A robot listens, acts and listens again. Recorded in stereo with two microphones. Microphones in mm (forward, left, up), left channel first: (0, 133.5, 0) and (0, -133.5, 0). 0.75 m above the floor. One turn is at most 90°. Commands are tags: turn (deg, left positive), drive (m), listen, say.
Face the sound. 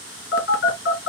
<turn deg="50"/>
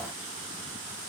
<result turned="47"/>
<listen/>
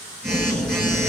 <say>Facing the phone buzzing.</say>